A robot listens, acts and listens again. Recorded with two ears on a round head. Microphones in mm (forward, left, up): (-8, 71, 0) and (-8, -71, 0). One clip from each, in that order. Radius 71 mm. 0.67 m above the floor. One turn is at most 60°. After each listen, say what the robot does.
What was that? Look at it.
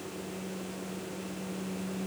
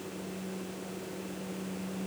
Keep listening.
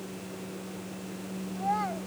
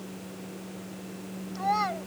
Turn 60° right.
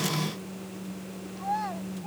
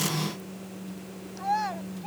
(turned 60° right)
Turn 35° right.
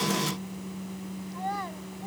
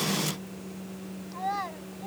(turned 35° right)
Turn 15° right.
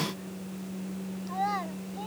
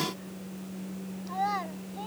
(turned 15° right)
Found it: a child speaking, straight ahead.